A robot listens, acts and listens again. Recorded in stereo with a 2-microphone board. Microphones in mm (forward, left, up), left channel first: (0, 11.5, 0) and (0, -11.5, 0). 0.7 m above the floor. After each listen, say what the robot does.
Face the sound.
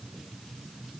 Keep listening.
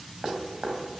Turn 35° right.
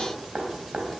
Turn 110° right.
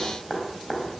Facing the dripping.